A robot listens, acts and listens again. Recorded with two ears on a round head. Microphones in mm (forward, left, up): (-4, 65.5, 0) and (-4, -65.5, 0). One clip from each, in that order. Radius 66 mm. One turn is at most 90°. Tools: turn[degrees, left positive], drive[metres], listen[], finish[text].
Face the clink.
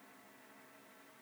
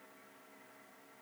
Action: listen[]
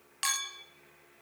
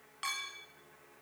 Action: turn[90]
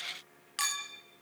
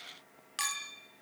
Action: finish[Facing the clink, 1 to 2 m away.]